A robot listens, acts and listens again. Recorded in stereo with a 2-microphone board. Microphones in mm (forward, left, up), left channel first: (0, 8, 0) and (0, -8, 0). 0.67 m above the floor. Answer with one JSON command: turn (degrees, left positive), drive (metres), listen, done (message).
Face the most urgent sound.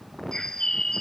{"listen": true}
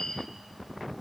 {"listen": true}
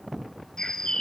{"done": "I can't make out anything urgent to turn to."}